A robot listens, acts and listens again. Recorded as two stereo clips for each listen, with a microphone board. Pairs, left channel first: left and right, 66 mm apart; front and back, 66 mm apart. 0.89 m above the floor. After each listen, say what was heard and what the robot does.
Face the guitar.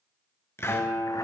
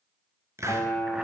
The guitar: 45° left. Turn 45° left.
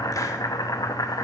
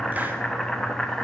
Keep listening.
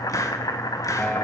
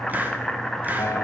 The guitar is now 25° left. Turn 25° left.
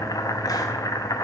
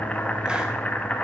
Keep listening.
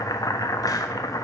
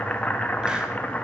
Keep listening.
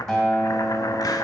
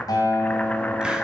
The guitar is now 10° left. Turn 10° left.
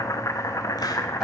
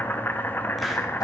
Keep listening.
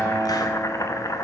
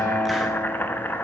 Facing the guitar, 2 to 4 m away.